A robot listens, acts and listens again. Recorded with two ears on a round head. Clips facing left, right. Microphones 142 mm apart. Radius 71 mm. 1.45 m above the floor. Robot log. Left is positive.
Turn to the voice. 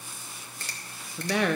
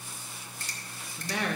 note: The woman speaking: about 55° left or 125° left.
cmd yaw +55
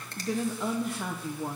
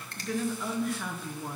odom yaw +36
note: So it is at 20° left.
cmd yaw +20
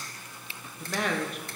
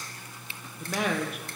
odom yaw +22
end: Facing the woman speaking, under 1 m away.